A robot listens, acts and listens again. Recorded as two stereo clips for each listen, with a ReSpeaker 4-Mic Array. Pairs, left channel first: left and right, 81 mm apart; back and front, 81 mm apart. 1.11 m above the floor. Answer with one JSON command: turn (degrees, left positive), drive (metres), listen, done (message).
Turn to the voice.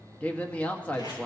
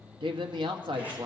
{"turn": 15}
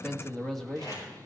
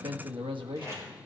{"done": "Facing the man speaking, 1 to 2 m away."}